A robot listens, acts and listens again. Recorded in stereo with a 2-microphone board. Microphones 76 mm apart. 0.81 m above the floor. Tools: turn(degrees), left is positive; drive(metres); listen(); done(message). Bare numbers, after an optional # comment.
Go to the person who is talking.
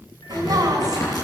# The woman speaking: about 50° right or 130° right.
turn(-50)
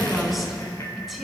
drive(1.0)
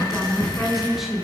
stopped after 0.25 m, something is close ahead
done("Something is in my way. I am facing the woman speaking but have not reached it.")